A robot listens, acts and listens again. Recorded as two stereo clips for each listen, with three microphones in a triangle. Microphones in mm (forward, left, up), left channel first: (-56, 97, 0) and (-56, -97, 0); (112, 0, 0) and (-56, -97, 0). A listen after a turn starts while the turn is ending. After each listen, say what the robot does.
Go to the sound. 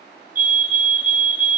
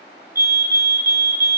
Turn 125° right.
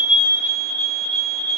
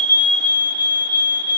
Drive 1.0 m forward.
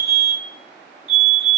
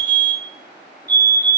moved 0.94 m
Drive 1.0 m forward.
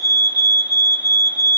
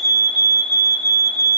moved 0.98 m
Drive 1.0 m forward.
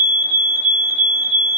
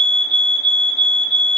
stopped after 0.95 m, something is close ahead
Turn 10° right.
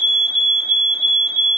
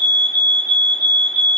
I am next to the fire alarm.